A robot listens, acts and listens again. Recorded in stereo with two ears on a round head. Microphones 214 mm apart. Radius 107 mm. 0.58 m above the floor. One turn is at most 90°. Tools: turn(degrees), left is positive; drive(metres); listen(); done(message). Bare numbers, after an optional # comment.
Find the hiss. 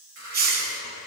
# The hiss: about 40° right or 140° right.
turn(-40)
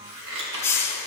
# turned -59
# So it is at 15° left.
turn(15)
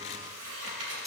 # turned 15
done("Facing the hiss.")